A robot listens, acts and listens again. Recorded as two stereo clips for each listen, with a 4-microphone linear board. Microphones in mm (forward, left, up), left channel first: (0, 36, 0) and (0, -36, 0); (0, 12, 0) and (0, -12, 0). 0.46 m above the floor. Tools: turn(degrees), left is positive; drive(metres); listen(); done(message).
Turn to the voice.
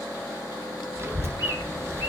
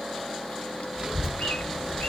turn(degrees=-35)
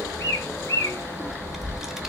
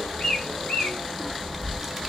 done("Found it: a child speaking, straight ahead.")